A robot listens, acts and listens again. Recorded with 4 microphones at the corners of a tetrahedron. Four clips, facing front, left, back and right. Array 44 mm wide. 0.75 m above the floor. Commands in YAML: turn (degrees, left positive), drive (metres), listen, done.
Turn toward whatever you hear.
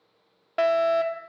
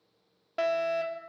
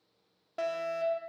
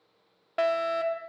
turn: -20
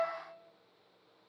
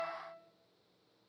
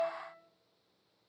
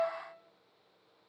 done: "Found it: a fire alarm, straight ahead, 2 to 4 m away."